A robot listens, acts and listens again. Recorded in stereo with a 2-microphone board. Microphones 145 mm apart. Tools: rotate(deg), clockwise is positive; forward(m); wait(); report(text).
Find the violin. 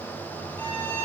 rotate(-30)
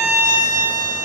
rotate(20)
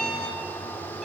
report("Facing the violin.")